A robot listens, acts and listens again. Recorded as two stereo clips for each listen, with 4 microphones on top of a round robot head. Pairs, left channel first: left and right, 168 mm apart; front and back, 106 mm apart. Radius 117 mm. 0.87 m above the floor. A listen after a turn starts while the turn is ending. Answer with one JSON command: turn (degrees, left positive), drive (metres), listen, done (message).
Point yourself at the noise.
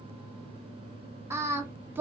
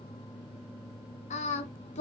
{"turn": -10}
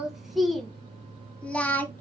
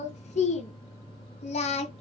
{"turn": 10}
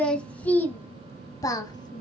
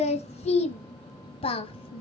{"turn": 30}
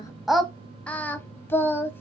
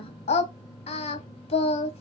{"turn": 15}
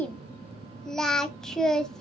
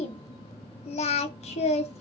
{"done": "Found it: singing, straight ahead."}